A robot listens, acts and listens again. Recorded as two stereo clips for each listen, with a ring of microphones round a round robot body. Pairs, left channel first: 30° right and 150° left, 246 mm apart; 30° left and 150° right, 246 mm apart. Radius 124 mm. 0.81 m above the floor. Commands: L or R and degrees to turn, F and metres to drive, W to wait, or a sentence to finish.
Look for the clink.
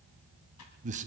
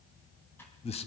W
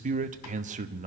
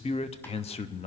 W
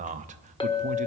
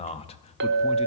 R100
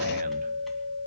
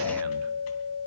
L10
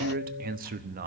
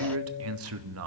W
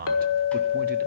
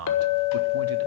Facing the clink, 1 to 2 m away.